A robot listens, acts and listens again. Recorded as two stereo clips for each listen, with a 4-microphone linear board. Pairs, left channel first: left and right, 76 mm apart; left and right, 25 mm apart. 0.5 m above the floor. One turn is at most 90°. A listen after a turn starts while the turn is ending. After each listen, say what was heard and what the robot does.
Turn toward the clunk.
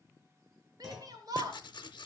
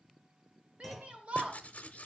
Turn 30° right.
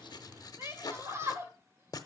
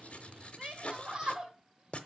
Keep listening.
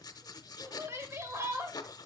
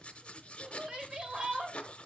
I heard a clunk, but can't make it out now. It was about 25° left or 145° right.